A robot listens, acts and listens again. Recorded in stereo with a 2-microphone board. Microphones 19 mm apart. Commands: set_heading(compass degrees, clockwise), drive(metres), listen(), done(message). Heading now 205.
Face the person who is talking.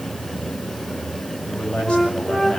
set_heading(140)
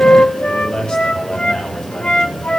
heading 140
set_heading(90)
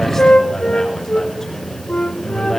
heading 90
set_heading(70)
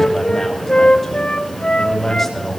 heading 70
done("Facing the man speaking, over 4 m away.")